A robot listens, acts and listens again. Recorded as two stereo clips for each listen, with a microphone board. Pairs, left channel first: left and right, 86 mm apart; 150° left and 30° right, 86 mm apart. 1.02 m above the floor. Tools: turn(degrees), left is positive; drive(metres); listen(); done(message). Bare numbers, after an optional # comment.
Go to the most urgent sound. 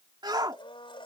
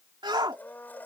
# The shout: 55° right.
turn(-55)
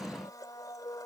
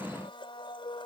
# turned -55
listen()
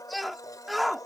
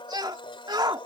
drive(1.0)
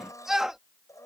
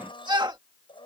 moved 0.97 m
drive(1.0)
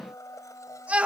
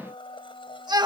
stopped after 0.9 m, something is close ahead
# The shout is now 20° right.
turn(-20)
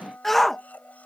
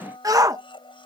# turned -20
done("Arrived at the shout, straight ahead.")